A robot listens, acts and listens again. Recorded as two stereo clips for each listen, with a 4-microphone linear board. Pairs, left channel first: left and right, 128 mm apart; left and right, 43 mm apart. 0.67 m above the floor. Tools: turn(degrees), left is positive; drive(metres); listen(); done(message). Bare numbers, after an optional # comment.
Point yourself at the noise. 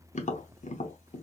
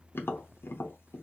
# The tapping: about 70° left or 110° left.
turn(70)
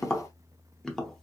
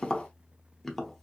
done("Facing the tapping, under 1 m away.")